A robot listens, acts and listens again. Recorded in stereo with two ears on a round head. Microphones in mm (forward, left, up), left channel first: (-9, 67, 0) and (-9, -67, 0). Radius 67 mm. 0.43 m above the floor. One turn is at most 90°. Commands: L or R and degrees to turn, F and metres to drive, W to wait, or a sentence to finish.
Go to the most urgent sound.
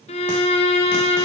W
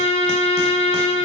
W
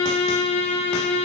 I can't make out anything urgent to turn to.